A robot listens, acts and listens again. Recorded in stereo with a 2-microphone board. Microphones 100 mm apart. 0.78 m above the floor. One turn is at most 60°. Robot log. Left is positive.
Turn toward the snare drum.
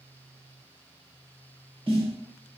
note: The snare drum: about 70° right or 110° right.
cmd yaw -60
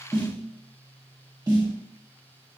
note: So it is at 45° right.
cmd yaw -45
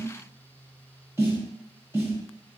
note: The snare drum is now 25° right.
cmd yaw -25
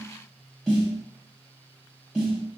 end: Found it: a snare drum, straight ahead, 1 to 2 m away.